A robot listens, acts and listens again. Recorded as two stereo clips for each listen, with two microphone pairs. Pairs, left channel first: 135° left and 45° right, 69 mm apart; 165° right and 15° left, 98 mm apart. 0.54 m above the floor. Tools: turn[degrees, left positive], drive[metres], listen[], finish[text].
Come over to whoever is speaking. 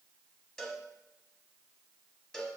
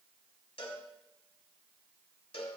Action: listen[]
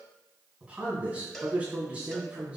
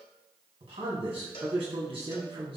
Thought: The man speaking: 25° left.
Action: turn[25]
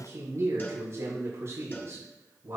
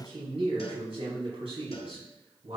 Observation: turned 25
Action: drive[1.0]
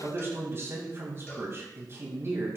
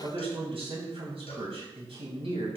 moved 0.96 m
Action: drive[1.0]
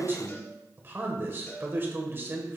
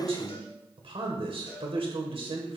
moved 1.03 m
Thought: The man speaking is now 10° left.
Action: turn[10]
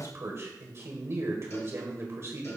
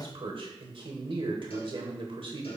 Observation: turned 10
Action: drive[1.0]
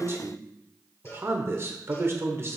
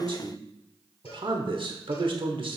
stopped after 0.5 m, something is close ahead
Action: finish[Arrived at the man speaking, straight ahead.]